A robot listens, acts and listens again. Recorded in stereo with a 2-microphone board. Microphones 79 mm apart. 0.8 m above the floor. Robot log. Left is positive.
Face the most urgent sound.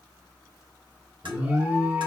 note: The alarm: about 20° right or 160° right.
cmd yaw -20
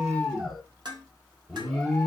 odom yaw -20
end: Facing the alarm.